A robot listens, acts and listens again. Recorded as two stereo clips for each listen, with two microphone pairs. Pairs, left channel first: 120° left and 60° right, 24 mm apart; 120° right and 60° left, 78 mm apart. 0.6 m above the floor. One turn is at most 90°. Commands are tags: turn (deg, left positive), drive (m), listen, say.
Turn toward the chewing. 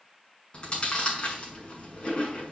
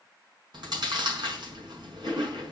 <turn deg="75"/>
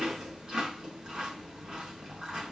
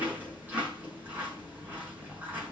<say>Facing the chewing, over 4 m away.</say>